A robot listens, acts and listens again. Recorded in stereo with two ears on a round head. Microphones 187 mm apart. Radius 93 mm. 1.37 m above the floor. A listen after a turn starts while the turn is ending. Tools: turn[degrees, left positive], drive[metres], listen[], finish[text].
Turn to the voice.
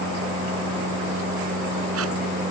Action: listen[]
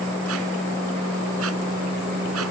Action: listen[]
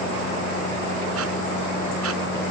Action: finish[I can't make out anyone speaking to turn to.]